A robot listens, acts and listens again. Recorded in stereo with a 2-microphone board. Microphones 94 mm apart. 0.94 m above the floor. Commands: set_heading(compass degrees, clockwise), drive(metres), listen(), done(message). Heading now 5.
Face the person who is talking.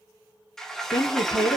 set_heading(290)
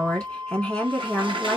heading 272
set_heading(262)
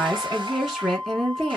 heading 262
done("Found it: a woman speaking, straight ahead.")